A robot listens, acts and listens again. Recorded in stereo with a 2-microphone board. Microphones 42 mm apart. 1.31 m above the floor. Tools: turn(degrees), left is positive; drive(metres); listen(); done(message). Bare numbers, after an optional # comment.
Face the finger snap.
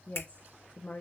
# The finger snap: about 65° left or 115° left.
turn(65)
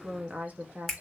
done("Facing the finger snap.")